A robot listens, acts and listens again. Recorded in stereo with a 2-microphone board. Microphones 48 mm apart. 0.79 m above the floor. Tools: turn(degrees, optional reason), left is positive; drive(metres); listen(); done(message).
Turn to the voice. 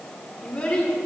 turn(degrees=25, reason="The child speaking: about 25° left or 155° left.")
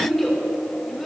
done("Facing the child speaking, 1 to 2 m away.")